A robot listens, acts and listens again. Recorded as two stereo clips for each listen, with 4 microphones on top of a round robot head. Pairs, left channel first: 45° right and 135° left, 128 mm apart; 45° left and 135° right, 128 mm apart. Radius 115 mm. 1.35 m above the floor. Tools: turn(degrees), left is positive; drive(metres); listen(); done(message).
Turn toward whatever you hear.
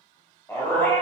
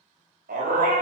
turn(degrees=-120)
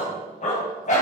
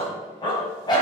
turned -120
turn(degrees=-15)
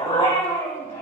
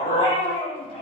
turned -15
done("Facing the dog barking.")